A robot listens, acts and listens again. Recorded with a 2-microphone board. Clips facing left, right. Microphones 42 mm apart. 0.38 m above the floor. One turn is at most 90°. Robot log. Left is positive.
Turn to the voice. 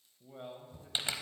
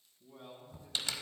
note: The man speaking: about 45° left or 135° left.
cmd yaw +45
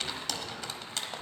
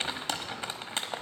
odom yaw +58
cmd idle
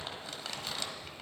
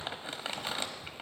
cmd idle
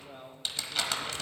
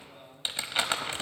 note: So it is at 65° left.
cmd yaw +65
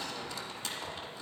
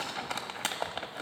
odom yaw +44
note: Nothing new. It was at 25° left.
cmd yaw +25
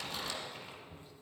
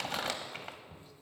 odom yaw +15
note: Nothing new. It was at 10° left.
cmd yaw +10
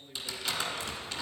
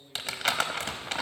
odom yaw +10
end: Found it: a man speaking, straight ahead.